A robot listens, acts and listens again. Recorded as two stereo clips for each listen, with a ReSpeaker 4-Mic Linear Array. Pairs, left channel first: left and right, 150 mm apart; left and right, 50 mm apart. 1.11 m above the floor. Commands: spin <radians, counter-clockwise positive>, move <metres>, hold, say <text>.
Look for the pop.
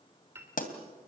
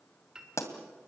spin 1.13
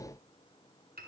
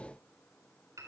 hold
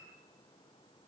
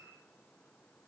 say I heard a pop, but can't make it out now. It was about straight ahead or 50° left.